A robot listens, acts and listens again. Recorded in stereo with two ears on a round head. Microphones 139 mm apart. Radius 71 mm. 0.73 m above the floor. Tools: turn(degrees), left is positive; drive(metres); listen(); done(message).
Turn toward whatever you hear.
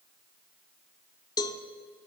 turn(degrees=25)
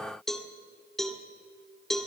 done("Facing the cowbell.")